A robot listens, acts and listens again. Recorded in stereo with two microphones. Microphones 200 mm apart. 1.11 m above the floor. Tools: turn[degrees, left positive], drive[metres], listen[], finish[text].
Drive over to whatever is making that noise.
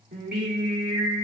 Thought: The singing: about 65° right or 115° right.
Action: turn[-65]
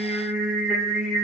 Action: drive[1.0]
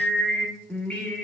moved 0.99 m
Action: drive[1.0]
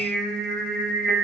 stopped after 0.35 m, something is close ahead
Action: finish[Arrived at the singing, straight ahead.]